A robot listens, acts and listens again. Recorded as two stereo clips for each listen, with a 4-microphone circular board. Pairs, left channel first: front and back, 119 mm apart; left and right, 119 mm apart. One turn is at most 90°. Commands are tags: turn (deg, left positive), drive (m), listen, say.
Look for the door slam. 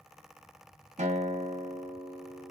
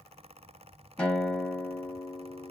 <listen/>
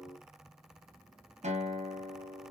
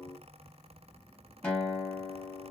<listen/>
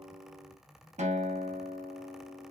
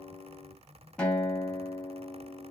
<say>I can't make out a door slam, only a guitar.</say>